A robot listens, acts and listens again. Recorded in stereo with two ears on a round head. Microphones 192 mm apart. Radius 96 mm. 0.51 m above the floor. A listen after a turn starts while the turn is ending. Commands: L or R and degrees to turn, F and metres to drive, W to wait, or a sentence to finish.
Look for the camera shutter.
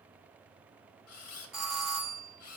L75
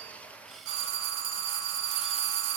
W
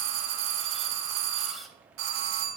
Found it: a camera shutter, straight ahead, 1 to 2 m away.